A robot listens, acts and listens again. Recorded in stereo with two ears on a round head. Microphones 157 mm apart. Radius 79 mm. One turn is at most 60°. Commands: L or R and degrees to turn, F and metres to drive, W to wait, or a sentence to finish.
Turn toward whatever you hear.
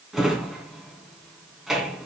L30
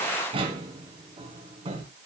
R30
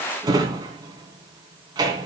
R25
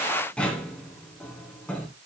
Found it: a drawer, straight ahead.